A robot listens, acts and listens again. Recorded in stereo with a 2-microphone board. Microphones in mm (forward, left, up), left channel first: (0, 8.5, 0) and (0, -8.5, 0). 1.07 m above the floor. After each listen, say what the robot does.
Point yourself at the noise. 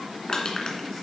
Turn 50° left.
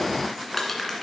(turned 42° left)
Turn 15° left.
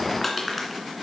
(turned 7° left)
Facing the crushing.